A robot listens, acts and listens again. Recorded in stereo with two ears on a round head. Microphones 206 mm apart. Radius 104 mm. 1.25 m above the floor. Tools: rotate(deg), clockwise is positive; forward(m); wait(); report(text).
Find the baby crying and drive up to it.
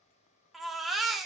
rotate(-30)
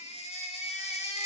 rotate(-150)
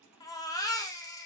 rotate(-15)
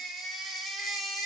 forward(1.0)
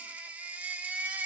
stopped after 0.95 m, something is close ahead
report("I am next to the baby crying.")